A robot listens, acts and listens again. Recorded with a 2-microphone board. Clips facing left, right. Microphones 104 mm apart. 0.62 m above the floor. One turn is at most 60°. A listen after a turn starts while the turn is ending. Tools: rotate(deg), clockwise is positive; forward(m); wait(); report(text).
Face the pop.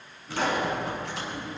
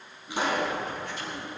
rotate(15)
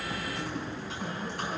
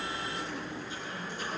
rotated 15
wait()
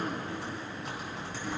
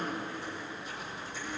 report("I heard a pop, but can't make it out now. It was about straight ahead or 150° right.")